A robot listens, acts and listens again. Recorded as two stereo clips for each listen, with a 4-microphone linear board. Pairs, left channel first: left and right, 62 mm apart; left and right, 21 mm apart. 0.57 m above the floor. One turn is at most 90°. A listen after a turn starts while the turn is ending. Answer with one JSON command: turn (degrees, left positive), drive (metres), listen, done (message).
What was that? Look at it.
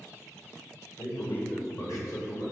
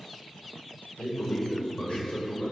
{"turn": 70}
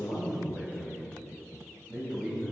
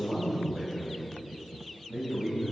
{"turn": 10}
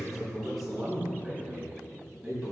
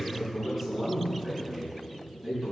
{"turn": -10}
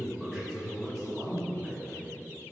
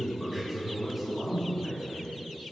{"done": "Facing the man speaking."}